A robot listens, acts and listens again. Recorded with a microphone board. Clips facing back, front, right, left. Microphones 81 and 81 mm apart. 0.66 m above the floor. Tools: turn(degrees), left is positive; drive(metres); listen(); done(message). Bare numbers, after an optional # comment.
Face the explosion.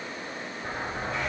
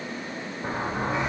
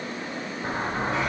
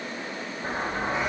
# The explosion: 15° right.
turn(-15)
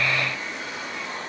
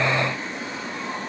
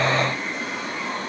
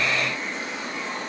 done("I heard an explosion from this way, but can't make it out now.")